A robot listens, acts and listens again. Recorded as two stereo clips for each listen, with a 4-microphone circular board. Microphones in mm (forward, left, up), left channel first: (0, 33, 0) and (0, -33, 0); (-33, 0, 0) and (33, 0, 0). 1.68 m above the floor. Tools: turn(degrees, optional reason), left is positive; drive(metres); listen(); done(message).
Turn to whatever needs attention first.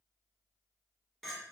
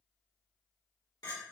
listen()
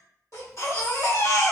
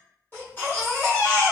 turn(degrees=125, reason="The baby crying: 125° left.")
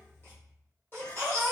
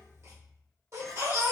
turn(degrees=40, reason="The baby crying is now 40° left.")
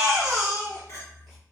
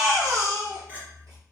turn(degrees=10, reason="The baby crying is now 10° left.")
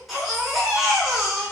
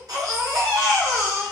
done("Found it: a baby crying, straight ahead.")